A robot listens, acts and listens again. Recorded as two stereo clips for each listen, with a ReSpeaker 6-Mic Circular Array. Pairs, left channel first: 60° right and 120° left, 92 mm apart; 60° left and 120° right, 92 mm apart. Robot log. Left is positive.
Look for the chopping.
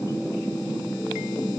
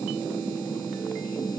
cmd idle
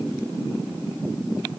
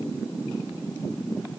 cmd idle
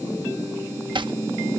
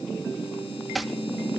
note: The chopping: 150° left.
cmd yaw +150
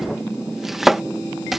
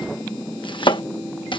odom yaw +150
note: The chopping is now 35° left.
cmd yaw +35
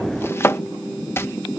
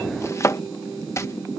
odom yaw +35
end: Found it: chopping, straight ahead.